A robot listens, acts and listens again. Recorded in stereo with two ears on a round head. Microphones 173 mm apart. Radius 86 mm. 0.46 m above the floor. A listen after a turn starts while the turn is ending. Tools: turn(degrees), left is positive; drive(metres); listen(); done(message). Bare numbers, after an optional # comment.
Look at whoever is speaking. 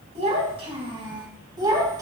# The child speaking: about 20° right or 160° right.
turn(-20)
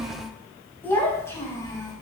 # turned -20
# So it is at 20° left.
turn(20)
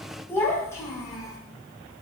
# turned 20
# The child speaking is now 20° left.
turn(20)
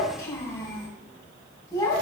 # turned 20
# The child speaking is now 15° left.
turn(15)
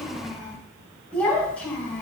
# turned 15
done("Found it: a child speaking, straight ahead.")